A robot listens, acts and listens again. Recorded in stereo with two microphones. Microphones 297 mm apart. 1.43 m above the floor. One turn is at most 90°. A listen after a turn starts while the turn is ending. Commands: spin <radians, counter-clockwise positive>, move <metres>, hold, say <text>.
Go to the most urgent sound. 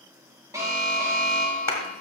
spin -0.52
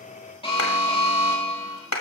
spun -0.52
spin 0.35
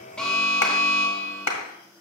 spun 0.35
move 1.0
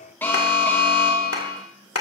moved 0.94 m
spin 0.17
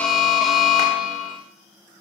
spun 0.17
move 1.0
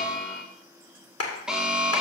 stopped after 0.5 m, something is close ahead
say Arrived at the alarm, straight ahead.